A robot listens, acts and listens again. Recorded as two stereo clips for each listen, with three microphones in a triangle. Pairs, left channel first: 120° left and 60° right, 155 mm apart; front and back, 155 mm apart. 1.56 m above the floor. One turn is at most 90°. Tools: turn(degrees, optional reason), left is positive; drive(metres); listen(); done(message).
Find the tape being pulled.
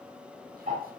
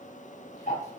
listen()
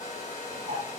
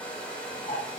listen()
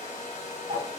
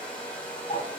done("I can't make out tape being pulled, only a hair dryer and ticking.")